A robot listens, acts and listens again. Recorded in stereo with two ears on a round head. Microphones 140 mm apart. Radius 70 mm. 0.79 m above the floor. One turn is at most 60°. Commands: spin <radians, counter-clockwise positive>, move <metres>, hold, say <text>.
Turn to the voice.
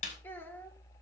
spin 0.52
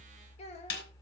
spin 1.05
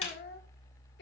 spin 1.05
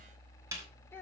spin 0.26
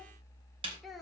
say Found it: a child speaking, straight ahead.